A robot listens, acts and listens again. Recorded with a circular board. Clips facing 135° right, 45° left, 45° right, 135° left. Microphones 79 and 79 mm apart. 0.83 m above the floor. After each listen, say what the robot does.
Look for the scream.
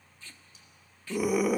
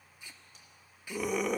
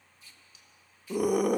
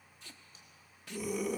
Turn 50° right.
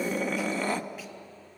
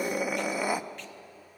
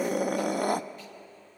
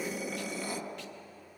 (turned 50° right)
Turn 30° right.
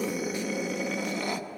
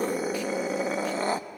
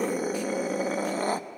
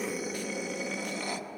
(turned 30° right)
Facing the scream.